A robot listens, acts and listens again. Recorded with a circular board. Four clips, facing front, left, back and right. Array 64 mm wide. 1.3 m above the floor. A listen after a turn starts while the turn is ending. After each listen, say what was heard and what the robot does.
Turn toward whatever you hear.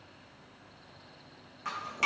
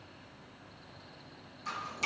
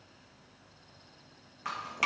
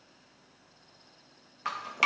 The dripping: 100° right. Turn 100° right.
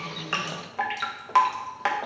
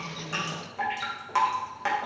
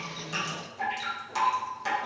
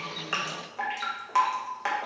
Facing the dripping.